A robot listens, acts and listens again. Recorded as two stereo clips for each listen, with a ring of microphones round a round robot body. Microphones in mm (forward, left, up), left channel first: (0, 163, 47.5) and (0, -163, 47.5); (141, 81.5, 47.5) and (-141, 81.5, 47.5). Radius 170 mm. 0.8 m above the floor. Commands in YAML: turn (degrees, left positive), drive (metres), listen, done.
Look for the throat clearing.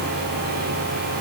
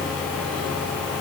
listen: true
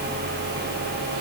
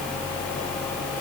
listen: true
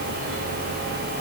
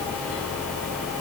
done: "I can't make out throat clearing."